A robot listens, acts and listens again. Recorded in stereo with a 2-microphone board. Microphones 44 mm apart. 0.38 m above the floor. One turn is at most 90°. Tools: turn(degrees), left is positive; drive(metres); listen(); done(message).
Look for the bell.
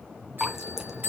turn(degrees=-50)
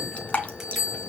done("Facing the bell, over 4 m away.")